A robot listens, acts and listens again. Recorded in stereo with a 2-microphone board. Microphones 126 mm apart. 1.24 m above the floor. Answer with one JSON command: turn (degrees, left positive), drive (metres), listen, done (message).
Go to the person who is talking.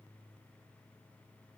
{"listen": true}
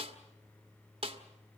{"listen": true}
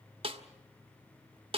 {"done": "I can't make out anyone speaking to turn to."}